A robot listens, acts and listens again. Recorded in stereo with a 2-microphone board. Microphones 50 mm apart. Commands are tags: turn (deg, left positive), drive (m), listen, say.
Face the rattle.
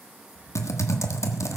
<turn deg="-90"/>
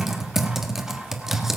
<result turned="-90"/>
<listen/>
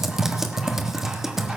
<listen/>
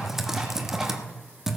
<say>Facing where the rattle came from. I can't hear it now.</say>